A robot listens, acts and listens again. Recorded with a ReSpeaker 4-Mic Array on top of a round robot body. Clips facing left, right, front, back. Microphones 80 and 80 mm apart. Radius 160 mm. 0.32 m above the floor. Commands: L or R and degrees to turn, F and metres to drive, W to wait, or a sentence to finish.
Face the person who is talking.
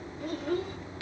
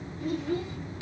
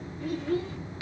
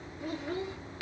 L110
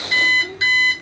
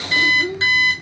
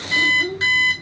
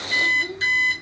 R15
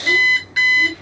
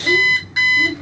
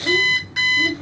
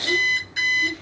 R30
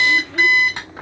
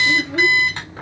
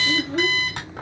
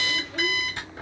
R20
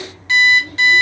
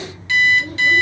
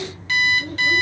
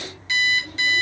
R25
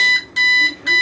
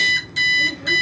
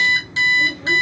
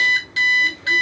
W
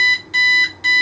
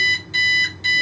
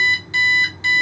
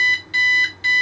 W
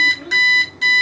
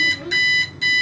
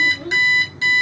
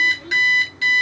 Facing the child speaking, 1 to 2 m away.